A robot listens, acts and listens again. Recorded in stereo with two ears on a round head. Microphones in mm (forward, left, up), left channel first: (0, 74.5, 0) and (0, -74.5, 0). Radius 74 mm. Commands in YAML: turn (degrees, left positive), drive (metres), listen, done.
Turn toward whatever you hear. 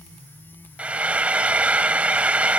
turn: -30
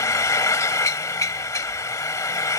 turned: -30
turn: 20
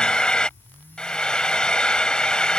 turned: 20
done: "Facing the frying."